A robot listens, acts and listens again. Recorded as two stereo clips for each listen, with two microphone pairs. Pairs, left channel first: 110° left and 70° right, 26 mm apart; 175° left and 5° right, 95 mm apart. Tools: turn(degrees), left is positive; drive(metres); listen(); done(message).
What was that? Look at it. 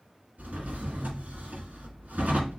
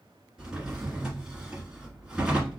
turn(degrees=-80)
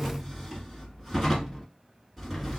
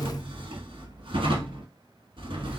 turn(degrees=15)
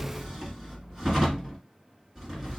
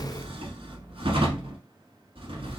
done("Found it: a drawer, straight ahead.")